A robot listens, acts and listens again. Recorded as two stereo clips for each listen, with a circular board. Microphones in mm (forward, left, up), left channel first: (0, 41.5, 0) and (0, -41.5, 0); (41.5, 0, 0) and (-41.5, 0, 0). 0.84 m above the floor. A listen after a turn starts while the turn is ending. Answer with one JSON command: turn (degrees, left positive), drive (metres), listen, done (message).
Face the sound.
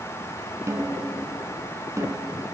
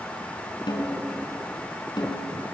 {"turn": -35}
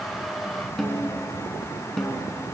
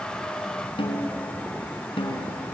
{"done": "Found it: a snare drum, straight ahead."}